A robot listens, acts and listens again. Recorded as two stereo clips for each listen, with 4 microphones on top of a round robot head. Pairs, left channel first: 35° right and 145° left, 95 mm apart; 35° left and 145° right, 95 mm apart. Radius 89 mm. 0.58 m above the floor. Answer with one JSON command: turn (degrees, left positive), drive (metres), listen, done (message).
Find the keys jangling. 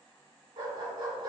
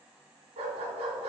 {"listen": true}
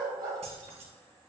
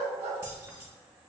{"turn": 150}
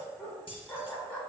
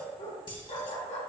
{"done": "Facing the keys jangling, 1 to 2 m away."}